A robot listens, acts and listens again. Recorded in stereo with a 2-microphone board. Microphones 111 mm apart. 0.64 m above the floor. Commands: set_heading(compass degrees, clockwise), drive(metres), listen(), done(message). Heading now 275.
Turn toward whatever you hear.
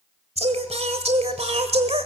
set_heading(345)
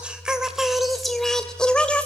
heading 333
set_heading(323)
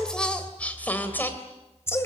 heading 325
set_heading(300)
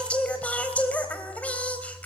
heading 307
set_heading(297)
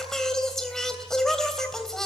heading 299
done("Found it: singing, straight ahead, 2 to 4 m away.")